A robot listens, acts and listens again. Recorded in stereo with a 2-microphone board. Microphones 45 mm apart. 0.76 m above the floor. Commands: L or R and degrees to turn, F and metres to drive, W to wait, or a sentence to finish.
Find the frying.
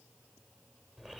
W
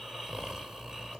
W
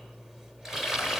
R30
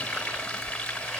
L20
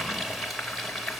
Facing the frying.